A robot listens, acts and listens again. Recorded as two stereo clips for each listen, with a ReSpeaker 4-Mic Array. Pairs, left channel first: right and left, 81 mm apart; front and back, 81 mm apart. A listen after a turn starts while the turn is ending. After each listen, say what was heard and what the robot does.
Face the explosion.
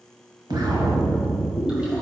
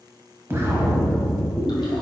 The explosion: 120° left. Turn 120° left.
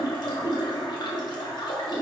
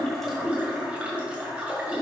Facing where the explosion came from. I can't hear it now.